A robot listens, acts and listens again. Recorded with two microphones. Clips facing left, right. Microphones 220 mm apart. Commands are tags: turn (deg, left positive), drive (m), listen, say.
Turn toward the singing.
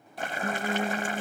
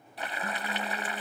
<turn deg="90"/>
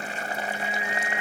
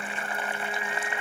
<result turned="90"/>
<turn deg="10"/>
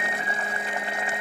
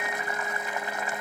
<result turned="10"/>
<turn deg="10"/>
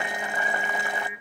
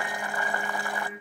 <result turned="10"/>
<turn deg="10"/>
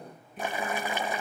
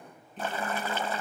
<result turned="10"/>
<turn deg="10"/>
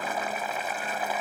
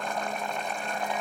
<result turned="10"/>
<listen/>
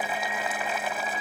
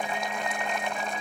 <say>Found it: singing, straight ahead.</say>